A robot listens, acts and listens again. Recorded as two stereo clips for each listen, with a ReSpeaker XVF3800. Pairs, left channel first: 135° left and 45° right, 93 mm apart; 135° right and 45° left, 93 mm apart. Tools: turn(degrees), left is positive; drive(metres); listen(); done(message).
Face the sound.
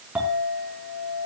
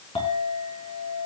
turn(degrees=-120)
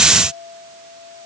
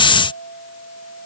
turn(degrees=-40)
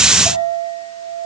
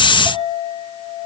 done("Found it: a clink, straight ahead, over 4 m away.")